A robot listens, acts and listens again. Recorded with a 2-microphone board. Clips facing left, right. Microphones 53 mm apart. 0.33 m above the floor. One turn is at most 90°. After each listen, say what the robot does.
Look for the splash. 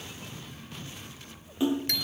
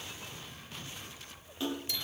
Turn 20° left.
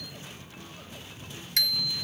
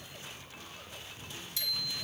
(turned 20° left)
Keep listening.
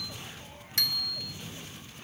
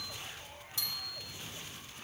I heard a splash, but can't make it out now. It was about straight ahead or 140° left.